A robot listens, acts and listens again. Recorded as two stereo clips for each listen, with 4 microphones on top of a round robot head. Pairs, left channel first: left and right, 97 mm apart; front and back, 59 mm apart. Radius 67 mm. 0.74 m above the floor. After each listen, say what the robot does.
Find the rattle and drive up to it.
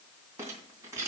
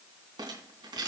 Turn 160° right.
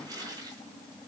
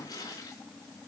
Keep listening.
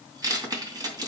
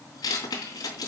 Turn 40° right.
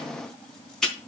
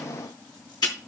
Drive 1.0 m forward.
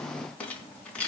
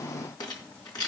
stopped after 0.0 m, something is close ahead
Turn 10° left.
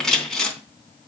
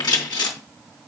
Blocked. The rattle is further on, straight ahead.